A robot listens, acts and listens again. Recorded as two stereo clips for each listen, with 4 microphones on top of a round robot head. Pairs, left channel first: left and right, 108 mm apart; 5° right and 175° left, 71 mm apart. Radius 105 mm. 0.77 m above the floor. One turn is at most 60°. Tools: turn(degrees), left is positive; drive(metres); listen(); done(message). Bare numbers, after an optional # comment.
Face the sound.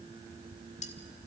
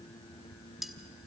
# The cutlery clinking: 90° left.
turn(60)
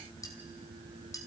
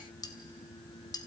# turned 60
# Nothing new. It was at 30° left.
turn(30)
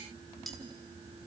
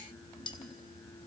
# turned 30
done("Facing the cutlery clinking.")